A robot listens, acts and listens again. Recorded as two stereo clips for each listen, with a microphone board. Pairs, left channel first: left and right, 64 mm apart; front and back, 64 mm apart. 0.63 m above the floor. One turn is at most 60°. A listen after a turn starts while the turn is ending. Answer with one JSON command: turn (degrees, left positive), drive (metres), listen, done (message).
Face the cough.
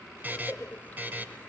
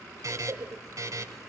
{"turn": 60}
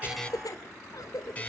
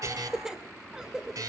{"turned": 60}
{"turn": 60}
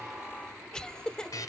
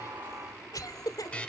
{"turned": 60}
{"turn": 15}
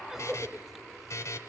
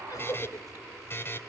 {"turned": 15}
{"done": "Facing the cough."}